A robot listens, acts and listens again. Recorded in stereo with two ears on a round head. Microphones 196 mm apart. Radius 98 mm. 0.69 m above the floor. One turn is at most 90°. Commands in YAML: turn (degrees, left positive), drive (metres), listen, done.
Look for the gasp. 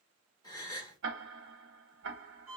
turn: 20
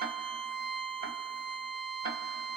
listen: true
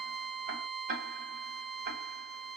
done: "I heard a gasp, but can't make it out now. It was about straight ahead or 140° left."